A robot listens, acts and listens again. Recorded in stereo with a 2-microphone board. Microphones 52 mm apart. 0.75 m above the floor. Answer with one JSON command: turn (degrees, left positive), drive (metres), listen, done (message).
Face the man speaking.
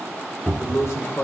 {"turn": 70}
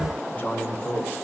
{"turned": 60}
{"turn": 30}
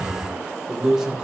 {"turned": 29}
{"turn": -15}
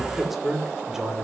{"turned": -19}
{"turn": -10}
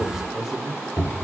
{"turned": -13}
{"turn": -10}
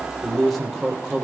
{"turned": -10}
{"done": "Facing the man speaking."}